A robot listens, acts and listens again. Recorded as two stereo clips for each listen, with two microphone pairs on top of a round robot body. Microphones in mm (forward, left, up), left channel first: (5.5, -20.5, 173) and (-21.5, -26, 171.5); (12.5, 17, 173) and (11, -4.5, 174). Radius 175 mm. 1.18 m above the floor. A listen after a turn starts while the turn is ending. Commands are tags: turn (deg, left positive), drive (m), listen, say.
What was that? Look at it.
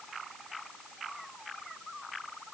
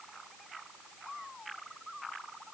<listen/>
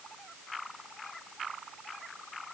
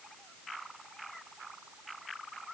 <listen/>
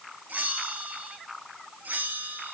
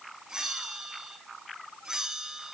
<turn deg="-165"/>
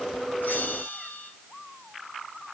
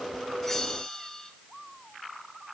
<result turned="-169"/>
<say>Facing the bell.</say>